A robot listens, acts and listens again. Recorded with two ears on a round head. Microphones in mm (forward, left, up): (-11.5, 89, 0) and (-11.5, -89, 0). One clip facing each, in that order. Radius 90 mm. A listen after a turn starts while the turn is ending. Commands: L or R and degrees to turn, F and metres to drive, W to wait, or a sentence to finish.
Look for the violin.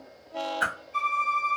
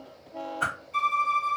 R45
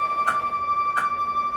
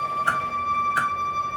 R90
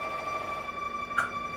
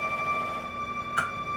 Found it: a violin, straight ahead.